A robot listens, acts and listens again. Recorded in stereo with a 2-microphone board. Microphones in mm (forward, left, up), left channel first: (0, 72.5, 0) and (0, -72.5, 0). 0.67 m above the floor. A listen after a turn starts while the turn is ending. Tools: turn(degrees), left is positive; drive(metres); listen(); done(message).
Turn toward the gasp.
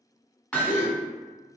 turn(degrees=70)
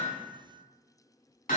listen()
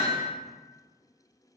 done("I heard a gasp, but can't make it out now. It was about straight ahead or 40° left.")